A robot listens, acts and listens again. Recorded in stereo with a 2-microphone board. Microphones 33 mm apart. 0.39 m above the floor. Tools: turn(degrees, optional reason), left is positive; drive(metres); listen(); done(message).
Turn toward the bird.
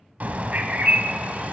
turn(degrees=-50, reason="The bird: about 50° right or 130° right.")
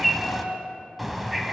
done("Facing the bird, 1 to 2 m away.")